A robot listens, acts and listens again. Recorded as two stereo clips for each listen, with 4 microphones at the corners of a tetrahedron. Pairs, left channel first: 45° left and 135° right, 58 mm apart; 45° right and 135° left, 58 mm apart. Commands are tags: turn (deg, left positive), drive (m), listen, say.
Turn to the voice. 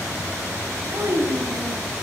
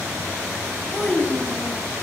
<turn deg="-110"/>
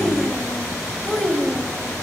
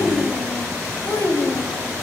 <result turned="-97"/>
<turn deg="-40"/>
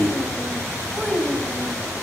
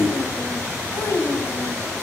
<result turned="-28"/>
<turn deg="-40"/>
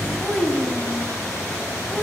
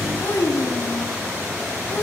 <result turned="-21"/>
<turn deg="-30"/>
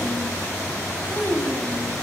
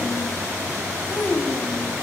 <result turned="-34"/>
<say>Found it: a child speaking, straight ahead, 2 to 4 m away.</say>